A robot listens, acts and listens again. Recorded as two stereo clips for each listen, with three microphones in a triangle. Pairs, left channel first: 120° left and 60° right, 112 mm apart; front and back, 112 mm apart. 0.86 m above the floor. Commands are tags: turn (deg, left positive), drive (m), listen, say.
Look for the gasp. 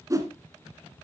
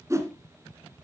<listen/>
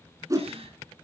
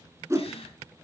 <turn deg="-30"/>
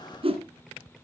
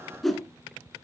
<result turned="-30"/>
<say>I heard a gasp from this way, but can't make it out now.</say>